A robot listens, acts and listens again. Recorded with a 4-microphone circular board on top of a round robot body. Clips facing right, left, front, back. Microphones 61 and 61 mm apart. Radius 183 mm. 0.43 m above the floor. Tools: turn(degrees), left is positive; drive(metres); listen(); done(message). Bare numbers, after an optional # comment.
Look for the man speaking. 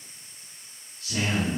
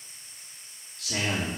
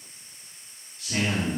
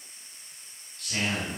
# The man speaking: 75° left.
turn(75)
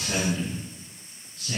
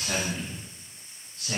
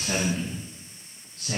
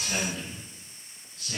# The man speaking is now 30° left.
turn(30)
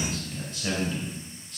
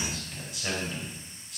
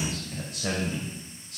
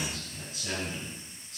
done("Facing the man speaking.")